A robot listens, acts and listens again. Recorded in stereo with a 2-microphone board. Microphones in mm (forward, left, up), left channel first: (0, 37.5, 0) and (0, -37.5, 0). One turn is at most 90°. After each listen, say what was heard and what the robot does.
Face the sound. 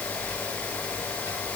Keep listening.
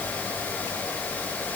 Keep listening.
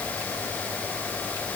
I can't make out anything to turn to.